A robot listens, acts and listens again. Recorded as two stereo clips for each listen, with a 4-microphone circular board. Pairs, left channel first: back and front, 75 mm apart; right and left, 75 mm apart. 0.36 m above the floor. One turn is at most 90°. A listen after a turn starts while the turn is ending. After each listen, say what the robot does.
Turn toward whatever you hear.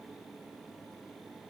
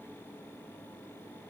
Keep listening.
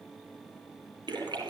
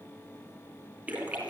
Turn 20° left.
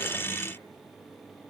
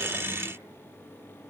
Facing where the splash came from. I can't hear it now.